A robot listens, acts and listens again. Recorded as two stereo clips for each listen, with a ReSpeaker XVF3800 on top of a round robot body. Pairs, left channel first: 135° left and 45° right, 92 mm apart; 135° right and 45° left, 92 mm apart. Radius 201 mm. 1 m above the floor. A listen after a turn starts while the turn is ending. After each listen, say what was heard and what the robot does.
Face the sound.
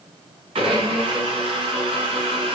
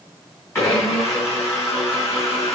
The blender: 70° right. Turn 70° right.
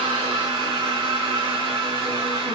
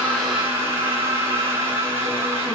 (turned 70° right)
The blender is now 20° right. Turn 20° right.
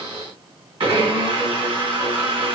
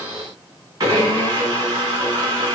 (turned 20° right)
Found it: a blender, straight ahead.